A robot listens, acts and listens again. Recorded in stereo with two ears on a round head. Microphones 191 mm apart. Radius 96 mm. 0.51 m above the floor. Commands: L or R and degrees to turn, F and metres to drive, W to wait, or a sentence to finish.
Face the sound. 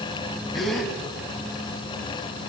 L30
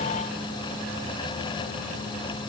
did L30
W
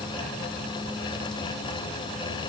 I heard a gasp, but can't make it out now. It was about 30° right or 150° left.